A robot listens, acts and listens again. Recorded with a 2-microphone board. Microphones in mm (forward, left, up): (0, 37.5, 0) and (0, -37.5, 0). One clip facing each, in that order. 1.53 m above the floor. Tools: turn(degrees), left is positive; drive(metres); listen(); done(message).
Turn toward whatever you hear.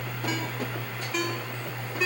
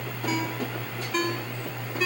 turn(degrees=30)
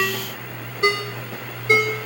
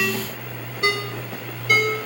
turn(degrees=150)
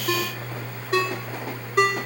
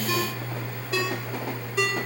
turn(degrees=50)
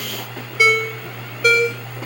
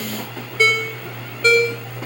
turn(degrees=10)
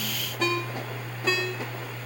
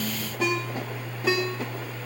done("Facing the ringtone.")